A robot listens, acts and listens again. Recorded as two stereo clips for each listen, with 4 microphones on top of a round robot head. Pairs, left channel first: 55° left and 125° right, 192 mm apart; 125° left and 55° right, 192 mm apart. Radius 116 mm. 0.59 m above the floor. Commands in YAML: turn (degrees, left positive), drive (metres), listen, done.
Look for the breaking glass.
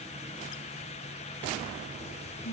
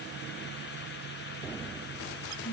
listen: true
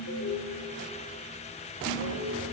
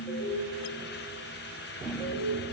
listen: true
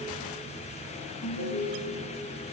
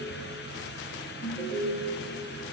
done: "I can't make out breaking glass, only an alarm."